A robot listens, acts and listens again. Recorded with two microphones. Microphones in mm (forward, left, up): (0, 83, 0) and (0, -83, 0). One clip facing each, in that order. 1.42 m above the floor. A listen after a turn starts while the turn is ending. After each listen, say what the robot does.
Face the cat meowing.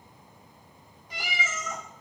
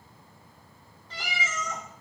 Turn 30° left.
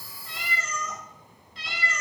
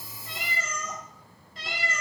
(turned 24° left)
Turn 55° right.
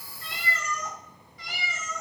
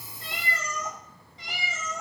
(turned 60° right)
Turn 30° right.
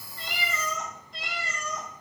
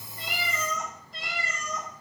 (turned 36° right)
Found it: a cat meowing, straight ahead.